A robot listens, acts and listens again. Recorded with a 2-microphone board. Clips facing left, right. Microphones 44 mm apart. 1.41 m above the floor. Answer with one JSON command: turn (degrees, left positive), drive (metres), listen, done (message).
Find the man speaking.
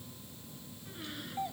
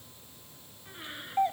{"listen": true}
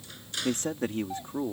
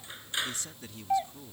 {"turn": 45}
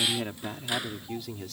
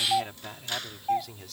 {"done": "Found it: a man speaking, straight ahead."}